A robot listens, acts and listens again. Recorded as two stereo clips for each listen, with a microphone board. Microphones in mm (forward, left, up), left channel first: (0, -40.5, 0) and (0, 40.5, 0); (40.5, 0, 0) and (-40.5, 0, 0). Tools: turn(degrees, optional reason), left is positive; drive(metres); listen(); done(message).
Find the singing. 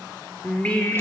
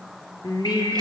turn(degrees=-20, reason="The singing: 20° right.")
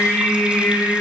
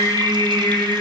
turn(degrees=-15, reason="The singing is now 15° right.")
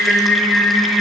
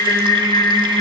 done("Found it: singing, straight ahead.")